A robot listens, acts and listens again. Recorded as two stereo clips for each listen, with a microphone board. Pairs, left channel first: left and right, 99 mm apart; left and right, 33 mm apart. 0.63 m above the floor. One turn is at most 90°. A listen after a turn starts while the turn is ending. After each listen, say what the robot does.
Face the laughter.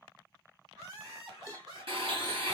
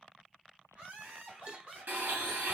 Turn 45° right.
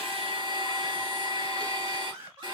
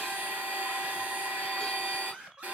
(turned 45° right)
Turn 45° right.
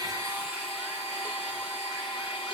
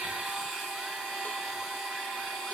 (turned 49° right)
Keep listening.
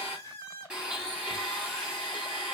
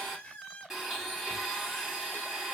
Turn 30° left.
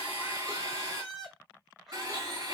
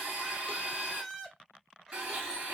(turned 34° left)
Facing the laughter, 1 to 2 m away.